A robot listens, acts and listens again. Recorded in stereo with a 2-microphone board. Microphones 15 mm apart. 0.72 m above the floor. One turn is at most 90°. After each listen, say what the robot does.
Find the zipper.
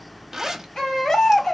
Turn 40° right.
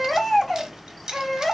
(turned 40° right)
Turn 90° right.
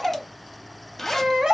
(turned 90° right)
Turn 25° left.
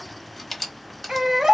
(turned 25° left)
Found it: a zipper, straight ahead.